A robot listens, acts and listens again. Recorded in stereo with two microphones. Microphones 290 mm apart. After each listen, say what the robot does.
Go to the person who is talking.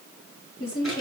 Turn 50° left.
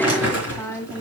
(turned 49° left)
Turn 10° left.
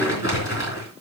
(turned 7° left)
Keep listening.
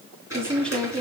Drive 1.0 m forward.
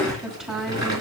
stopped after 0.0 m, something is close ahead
Something is in my way. I am facing the woman speaking but have not reached it.